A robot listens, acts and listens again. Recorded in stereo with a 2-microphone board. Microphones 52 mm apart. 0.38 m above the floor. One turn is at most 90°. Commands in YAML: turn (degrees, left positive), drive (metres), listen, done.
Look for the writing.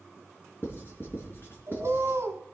turn: 50
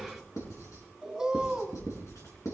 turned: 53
turn: 75
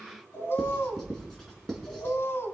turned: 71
done: "Facing the writing, 2 to 4 m away."